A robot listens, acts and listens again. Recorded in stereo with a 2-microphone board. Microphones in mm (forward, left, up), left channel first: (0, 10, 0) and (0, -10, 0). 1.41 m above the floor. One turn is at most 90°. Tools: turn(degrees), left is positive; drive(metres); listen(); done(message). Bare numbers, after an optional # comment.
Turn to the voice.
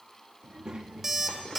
# The child speaking: about 35° right or 145° right.
turn(-35)
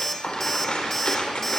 listen()
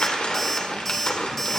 listen()
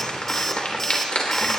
done("I heard a child speaking, but can't make it out now. It was about straight ahead or 110° right.")